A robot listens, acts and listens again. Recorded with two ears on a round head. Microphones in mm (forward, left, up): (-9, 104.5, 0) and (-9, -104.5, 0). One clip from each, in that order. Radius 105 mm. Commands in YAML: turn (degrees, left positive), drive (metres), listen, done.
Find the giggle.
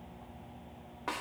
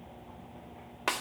listen: true
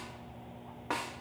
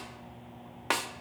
listen: true
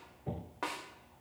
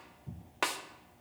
done: "I can't make out a giggle to turn to."